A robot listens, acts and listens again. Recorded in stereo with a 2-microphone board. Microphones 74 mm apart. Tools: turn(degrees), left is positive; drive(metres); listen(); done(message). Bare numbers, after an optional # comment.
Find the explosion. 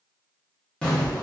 turn(30)
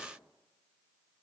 listen()
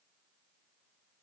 done("I heard an explosion, but can't make it out now. It was about 15° right or 135° left.")